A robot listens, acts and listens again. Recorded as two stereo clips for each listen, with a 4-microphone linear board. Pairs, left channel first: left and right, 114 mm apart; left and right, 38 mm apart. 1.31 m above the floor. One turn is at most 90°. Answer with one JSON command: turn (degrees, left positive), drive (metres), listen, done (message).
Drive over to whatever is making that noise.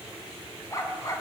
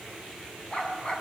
{"turn": 30}
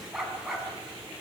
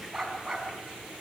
{"drive": 1.0}
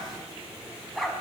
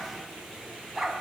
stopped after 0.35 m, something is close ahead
{"done": "Something is in my way. I am facing the dog barking but have not reached it."}